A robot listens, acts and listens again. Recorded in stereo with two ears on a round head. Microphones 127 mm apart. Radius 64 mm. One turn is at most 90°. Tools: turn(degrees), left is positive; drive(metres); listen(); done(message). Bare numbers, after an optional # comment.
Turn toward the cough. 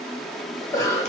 # The cough: about 20° left or 160° left.
turn(20)
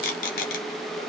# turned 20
listen()
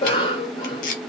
# So it is at 135° left.
turn(90)
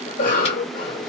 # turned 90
# The cough is now 80° left.
turn(80)
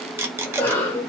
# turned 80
# The cough is now 15° left.
turn(15)
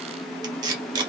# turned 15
listen()
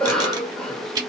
done("Facing the cough, 1 to 2 m away.")